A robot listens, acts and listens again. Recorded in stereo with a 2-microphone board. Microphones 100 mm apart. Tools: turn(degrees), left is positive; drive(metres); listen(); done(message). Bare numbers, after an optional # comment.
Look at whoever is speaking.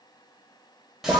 listen()
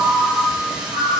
listen()
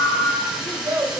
# The child speaking: about 35° right or 145° right.
turn(-35)
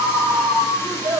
# So it is at 110° right.
turn(-110)
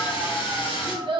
# The child speaking is now 65° right.
turn(-65)
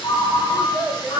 # The child speaking is now 10° right.
turn(-10)
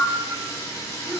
listen()
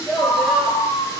done("Facing the child speaking.")